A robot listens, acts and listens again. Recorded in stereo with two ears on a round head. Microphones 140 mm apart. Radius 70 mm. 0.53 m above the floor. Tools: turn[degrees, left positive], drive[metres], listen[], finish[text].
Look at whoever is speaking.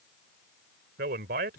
Thought: The man speaking: about 65° right or 115° right.
Action: turn[-65]
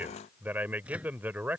Thought: So it is at 10° right.
Action: turn[-10]
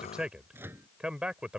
Action: finish[Facing the man speaking.]